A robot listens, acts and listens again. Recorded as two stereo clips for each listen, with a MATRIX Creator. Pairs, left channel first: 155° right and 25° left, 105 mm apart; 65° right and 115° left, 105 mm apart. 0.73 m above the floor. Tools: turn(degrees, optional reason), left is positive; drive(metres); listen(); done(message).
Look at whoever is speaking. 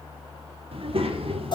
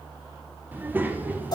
turn(degrees=40, reason="The child speaking: 40° left.")
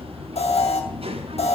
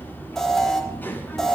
done("Facing the child speaking, 1 to 2 m away.")